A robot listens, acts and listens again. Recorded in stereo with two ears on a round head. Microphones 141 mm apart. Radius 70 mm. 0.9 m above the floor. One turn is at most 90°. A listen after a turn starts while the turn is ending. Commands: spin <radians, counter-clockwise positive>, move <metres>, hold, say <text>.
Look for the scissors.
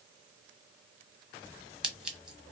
spin -0.52
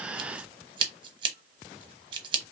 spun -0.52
spin -1.57
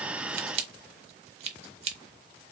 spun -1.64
spin -0.87
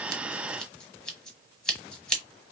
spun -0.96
say Found it: scissors, straight ahead.